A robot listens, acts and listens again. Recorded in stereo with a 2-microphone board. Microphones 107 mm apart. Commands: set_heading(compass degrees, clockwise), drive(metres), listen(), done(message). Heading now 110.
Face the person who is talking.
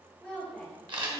set_heading(80)
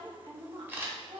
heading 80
set_heading(140)
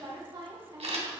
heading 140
set_heading(180)
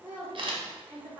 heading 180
set_heading(200)
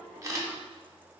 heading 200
listen()
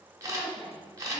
done("Found it: a woman speaking, straight ahead, 2 to 4 m away.")